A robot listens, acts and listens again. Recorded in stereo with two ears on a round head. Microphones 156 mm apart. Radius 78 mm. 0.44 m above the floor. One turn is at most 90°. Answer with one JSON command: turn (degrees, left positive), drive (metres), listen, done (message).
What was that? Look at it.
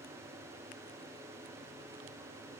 {"listen": true}
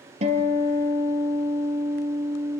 {"turn": -40}
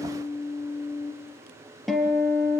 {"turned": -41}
{"done": "Facing the guitar, 2 to 4 m away."}